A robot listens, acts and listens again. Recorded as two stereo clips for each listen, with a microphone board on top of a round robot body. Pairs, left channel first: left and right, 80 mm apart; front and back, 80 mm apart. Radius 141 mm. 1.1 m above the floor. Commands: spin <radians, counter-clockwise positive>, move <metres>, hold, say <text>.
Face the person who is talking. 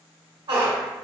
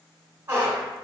hold
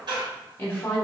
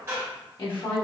spin 0.35
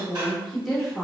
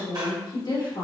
say Found it: a woman speaking, straight ahead, 1 to 2 m away.